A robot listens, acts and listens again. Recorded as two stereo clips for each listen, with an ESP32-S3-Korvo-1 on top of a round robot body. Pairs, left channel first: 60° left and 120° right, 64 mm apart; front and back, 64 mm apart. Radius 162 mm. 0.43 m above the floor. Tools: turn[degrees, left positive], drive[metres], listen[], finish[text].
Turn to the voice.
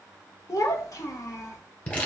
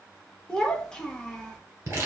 Thought: The child speaking: 80° left.
Action: turn[80]
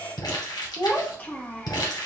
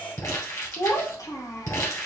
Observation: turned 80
Action: finish[Found it: a child speaking, straight ahead, 1 to 2 m away.]